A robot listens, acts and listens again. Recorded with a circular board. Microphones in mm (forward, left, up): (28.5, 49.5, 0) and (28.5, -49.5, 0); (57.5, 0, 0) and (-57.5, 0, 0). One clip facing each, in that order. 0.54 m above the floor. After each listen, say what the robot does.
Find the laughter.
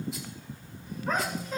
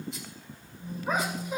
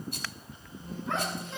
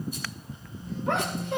Turn 165° right.
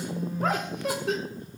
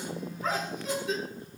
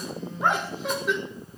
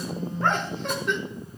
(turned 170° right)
Turn 85° left.
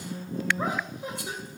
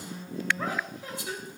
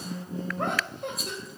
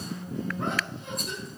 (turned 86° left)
Turn 20° left.
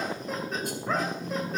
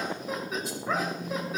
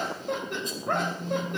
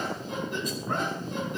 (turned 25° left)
Found it: laughter, straight ahead, 2 to 4 m away.